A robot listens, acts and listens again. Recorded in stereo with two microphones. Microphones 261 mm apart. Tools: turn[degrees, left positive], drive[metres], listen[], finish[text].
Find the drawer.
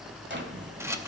Thought: The drawer: about 45° right or 135° right.
Action: turn[-45]
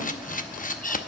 Action: listen[]
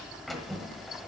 Action: finish[Facing the drawer, 1 to 2 m away.]